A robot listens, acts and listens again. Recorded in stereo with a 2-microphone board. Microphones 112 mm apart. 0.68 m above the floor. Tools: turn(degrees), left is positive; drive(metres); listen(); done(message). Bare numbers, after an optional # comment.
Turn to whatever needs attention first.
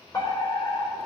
# The fire alarm: about 35° left or 145° left.
turn(35)
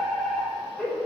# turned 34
done("Facing the fire alarm, over 4 m away.")